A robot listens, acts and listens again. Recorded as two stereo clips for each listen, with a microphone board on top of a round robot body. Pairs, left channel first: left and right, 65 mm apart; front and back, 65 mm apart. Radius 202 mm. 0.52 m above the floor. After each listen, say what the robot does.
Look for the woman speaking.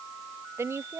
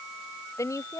Turn 40° right.
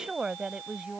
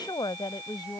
Turn 10° right.
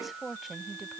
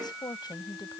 Facing the woman speaking.